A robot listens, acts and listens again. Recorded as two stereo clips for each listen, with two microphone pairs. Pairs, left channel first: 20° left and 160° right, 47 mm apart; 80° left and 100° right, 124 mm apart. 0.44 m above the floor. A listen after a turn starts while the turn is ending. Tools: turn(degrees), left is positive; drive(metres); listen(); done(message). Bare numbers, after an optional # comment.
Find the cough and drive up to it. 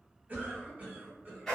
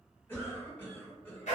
# The cough: 155° left.
turn(155)
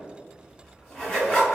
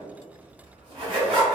listen()
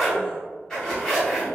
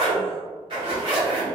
listen()
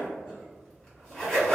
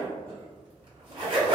done("Facing where the cough came from. I can't hear it now. I did not reach it.")